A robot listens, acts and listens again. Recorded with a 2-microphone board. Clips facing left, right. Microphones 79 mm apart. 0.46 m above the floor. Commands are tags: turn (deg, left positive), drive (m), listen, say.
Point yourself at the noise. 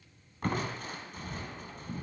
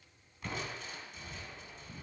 <turn deg="50"/>
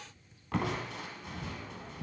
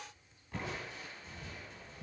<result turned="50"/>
<turn deg="85"/>
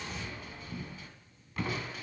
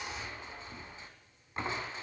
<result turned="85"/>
<turn deg="-25"/>
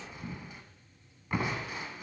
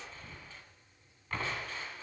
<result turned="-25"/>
<turn deg="15"/>
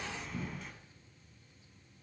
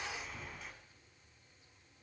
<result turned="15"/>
<say>Facing the crushing, 1 to 2 m away.</say>